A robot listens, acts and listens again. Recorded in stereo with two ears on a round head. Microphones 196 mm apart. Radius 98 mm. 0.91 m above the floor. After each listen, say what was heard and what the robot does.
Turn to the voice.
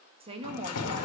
The woman speaking: about 25° right or 155° right. Turn 25° right.
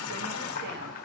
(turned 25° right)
Keep listening.
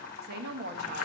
So it is at 125° right. Turn 125° right.
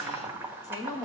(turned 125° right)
The woman speaking is now 20° left. Turn 20° left.
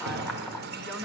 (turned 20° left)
Keep listening.
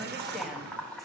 Keep listening.
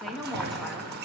Found it: a woman speaking, straight ahead, 1 to 2 m away.